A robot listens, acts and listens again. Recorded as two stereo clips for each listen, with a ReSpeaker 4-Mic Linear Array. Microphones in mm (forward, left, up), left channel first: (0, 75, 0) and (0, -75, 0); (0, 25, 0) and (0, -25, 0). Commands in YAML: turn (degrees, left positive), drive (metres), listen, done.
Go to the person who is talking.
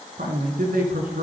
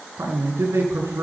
turn: -90
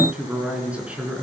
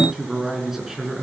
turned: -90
turn: -10
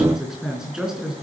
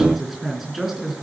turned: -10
drive: 1.0
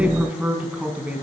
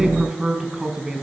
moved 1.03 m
turn: -10
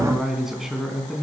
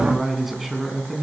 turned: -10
drive: 1.0
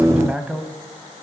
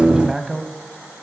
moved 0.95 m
turn: -10
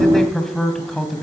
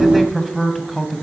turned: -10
drive: 1.0
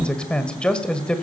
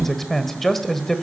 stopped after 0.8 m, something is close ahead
turn: 10
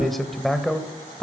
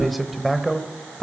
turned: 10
done: "Arrived at the man speaking, straight ahead."